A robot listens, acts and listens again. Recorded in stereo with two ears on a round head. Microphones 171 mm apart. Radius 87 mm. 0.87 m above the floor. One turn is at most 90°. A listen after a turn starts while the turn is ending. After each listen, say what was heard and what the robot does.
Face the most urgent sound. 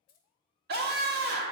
The scream: about 60° right or 120° right. Turn 60° right.
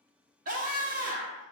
So it is at 50° right. Turn 50° right.
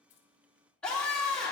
Facing the scream.